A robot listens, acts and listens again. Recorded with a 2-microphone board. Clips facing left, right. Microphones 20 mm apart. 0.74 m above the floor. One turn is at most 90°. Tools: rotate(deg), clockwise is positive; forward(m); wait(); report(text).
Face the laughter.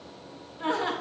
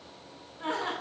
rotate(-30)
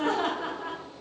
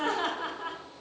rotate(15)
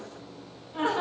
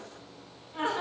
report("Found it: laughter, straight ahead.")